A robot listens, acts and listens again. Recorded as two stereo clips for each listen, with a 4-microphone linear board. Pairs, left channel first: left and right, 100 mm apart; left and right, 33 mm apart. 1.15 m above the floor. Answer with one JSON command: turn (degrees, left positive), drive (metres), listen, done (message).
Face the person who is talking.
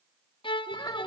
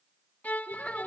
{"turn": 35}
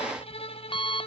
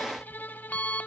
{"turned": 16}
{"listen": true}
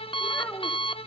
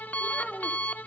{"turn": 20}
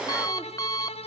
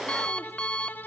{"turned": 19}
{"listen": true}
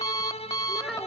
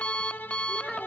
{"done": "Found it: a child speaking, straight ahead, 2 to 4 m away."}